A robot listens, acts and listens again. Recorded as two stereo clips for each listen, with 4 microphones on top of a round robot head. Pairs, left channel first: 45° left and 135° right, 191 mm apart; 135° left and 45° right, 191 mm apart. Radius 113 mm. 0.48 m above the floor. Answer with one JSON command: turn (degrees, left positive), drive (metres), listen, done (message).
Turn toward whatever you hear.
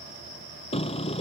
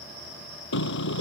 {"turn": 105}
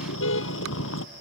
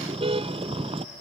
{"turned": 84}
{"turn": 20}
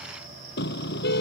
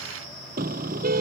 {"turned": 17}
{"done": "Found it: a car horn, straight ahead."}